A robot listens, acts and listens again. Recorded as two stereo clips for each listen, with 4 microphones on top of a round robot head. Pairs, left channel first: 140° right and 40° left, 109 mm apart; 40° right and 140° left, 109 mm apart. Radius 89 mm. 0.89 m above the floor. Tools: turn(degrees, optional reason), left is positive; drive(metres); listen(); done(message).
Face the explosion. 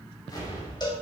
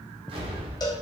turn(degrees=170, reason="The explosion: 170° left.")
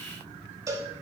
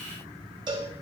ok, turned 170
done("Facing where the explosion came from. I can't hear it now.")